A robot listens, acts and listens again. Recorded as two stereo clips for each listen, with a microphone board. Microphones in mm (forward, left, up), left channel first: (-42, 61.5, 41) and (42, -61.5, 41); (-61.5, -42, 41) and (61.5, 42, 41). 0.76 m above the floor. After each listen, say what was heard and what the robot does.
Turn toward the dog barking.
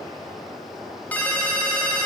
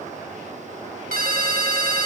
Keep listening.
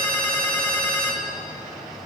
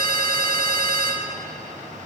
Keep listening.
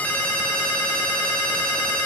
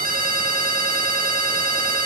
I can't make out a dog barking, only a ringtone.